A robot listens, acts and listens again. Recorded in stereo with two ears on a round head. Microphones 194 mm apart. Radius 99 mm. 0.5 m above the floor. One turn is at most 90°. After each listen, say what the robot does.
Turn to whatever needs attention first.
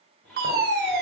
Turn 50° right.
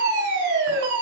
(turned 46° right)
Turn 70° right.
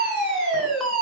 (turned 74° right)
Found it: a fire alarm, straight ahead.